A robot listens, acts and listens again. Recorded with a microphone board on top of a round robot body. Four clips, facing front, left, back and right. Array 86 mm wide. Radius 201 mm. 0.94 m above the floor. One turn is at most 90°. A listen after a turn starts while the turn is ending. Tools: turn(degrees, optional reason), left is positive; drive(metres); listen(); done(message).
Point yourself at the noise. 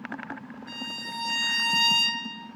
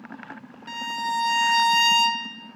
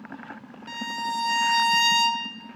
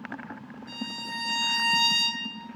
turn(degrees=90, reason="The violin: 120° left.")
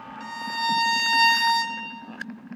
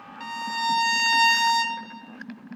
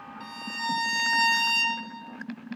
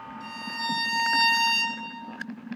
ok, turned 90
turn(degrees=50, reason="The violin is now 50° left.")
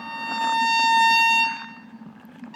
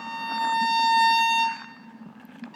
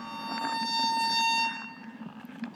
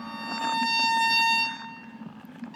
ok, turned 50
done("Facing the violin, under 1 m away.")